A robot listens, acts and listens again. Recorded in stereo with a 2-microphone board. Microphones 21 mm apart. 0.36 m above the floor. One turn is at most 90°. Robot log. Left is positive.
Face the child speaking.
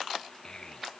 note: The child speaking: about 40° left or 140° left.
cmd yaw +40
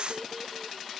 cmd idle
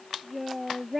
end: Facing the child speaking.